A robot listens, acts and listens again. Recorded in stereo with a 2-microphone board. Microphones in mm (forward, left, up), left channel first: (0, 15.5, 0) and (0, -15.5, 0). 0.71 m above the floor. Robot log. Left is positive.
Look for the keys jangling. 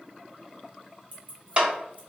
note: The keys jangling: about 55° right or 125° right.
cmd yaw -55
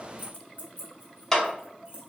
note: So it is at 85° right.
cmd yaw -85
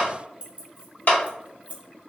note: The keys jangling is now 40° right.
cmd yaw -40
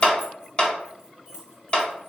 cmd idle
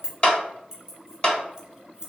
note: The keys jangling is now 20° right.
cmd yaw -20
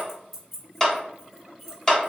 end: Found it: keys jangling, straight ahead.